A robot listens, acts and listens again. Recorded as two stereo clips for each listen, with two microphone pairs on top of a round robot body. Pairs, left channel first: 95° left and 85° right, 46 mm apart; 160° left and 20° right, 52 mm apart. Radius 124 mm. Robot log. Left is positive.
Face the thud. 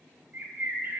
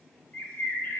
cmd idle
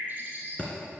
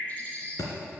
note: The thud: 160° left.
cmd yaw +160
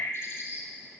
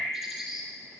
end: Facing where the thud came from. I can't hear it now.